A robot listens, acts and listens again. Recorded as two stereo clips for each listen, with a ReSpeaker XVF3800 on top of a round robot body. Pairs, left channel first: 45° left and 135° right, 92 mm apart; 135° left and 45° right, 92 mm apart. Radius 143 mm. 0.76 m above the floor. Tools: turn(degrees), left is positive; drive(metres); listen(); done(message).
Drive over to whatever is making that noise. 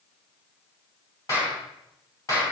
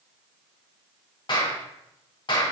turn(degrees=100)
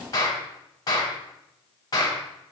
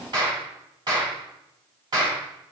drive(metres=1.0)
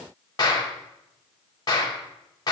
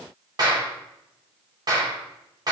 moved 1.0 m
drive(metres=1.0)
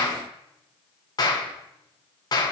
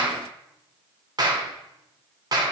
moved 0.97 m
drive(metres=1.0)
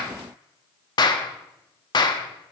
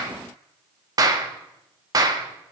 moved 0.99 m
drive(metres=1.0)
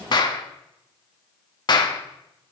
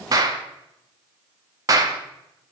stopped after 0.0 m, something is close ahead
done("Arrived at the clap, straight ahead.")